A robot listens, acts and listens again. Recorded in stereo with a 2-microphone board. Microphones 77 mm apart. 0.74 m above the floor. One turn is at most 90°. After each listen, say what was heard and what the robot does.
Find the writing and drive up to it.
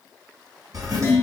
The writing: about 50° right or 130° right. Turn 50° right.
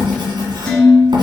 So it is at 80° right. Turn 80° right.
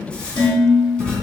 The writing is now 15° left. Turn 15° left.
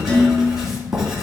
Drive 1.0 m forward.
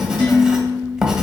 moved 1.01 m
Drive 1.0 m forward.
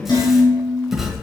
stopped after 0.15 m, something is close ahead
Arrived at the writing, straight ahead.